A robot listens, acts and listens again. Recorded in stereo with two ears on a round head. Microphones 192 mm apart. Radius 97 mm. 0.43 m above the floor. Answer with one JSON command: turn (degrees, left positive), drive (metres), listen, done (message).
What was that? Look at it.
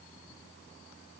{"listen": true}
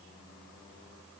{"listen": true}
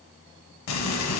{"turn": 90}
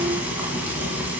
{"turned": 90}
{"turn": -10}
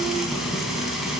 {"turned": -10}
{"done": "Found it: frying, straight ahead, 1 to 2 m away."}